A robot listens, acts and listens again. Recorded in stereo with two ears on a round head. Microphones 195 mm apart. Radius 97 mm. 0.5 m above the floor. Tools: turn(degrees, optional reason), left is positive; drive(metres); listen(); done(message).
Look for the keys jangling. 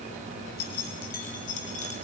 turn(degrees=35, reason="The keys jangling: about 35° left or 145° left.")
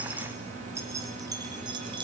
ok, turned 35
turn(degrees=-25, reason="So it is at 25° right.")
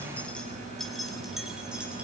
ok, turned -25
done("Facing the keys jangling.")